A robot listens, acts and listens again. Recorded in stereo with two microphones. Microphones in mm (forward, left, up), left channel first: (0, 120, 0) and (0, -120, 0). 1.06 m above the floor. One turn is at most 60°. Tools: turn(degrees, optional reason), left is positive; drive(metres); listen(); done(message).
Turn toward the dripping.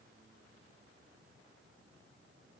listen()
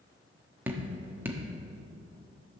turn(degrees=-30)
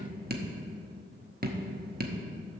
turn(degrees=-60, reason="So it is at 140° right.")
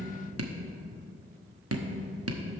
turn(degrees=-60, reason="The dripping is now 75° right.")
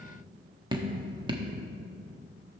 turn(degrees=-20, reason="The dripping is now 20° right.")
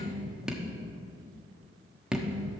done("Facing the dripping, 1 to 2 m away.")